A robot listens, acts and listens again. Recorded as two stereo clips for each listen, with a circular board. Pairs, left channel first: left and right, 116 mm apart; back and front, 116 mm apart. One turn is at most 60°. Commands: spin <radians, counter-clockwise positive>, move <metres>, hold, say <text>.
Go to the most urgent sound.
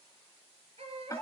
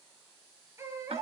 spin -1.05
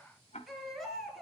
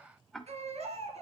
move 1.0
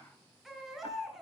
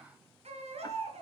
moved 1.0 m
move 1.0
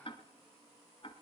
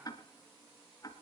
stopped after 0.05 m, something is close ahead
hold
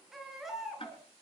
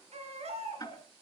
say Blocked. The baby crying is further on, straight ahead.